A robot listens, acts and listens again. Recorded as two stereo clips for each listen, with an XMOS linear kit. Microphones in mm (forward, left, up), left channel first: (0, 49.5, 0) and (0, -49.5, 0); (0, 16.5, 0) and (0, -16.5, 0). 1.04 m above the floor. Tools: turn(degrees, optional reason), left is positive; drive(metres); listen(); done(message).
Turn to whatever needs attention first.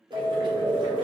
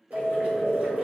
turn(degrees=-65, reason="The alarm: about 65° right or 115° right.")
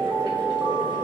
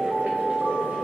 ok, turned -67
turn(degrees=-15, reason="So it is at 15° right.")
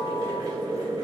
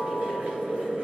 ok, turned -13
listen()
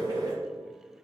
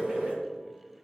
listen()
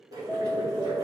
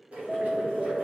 done("Facing the alarm.")